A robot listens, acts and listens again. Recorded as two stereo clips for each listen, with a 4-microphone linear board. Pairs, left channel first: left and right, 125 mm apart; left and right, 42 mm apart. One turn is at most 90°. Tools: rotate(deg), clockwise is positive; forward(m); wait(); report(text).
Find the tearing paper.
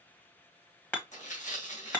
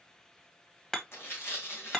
rotate(-90)
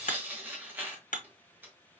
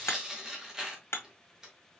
rotate(15)
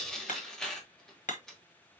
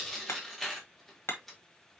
report("Found it: tearing paper, straight ahead.")